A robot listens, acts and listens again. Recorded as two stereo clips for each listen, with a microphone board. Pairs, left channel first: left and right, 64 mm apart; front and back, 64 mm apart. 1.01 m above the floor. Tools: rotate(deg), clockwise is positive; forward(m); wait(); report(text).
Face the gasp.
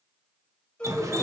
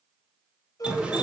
rotate(-20)
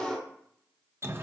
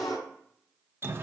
report("Facing the gasp.")